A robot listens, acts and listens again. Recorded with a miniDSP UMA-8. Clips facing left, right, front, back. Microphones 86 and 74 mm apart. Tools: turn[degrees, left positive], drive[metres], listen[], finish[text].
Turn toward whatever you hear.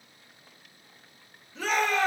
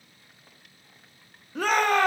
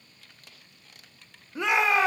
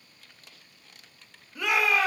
Thought: The shout: 65° right.
Action: turn[-65]
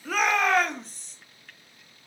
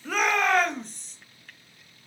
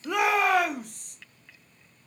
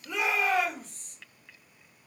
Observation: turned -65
Action: finish[Found it: a shout, straight ahead.]